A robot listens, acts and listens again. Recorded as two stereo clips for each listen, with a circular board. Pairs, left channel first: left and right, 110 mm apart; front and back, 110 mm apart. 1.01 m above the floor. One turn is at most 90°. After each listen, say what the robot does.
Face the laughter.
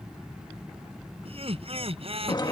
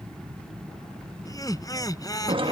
Turn 60° right.
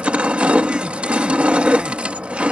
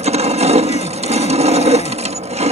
Keep listening.
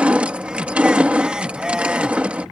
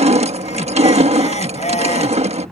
Facing the laughter.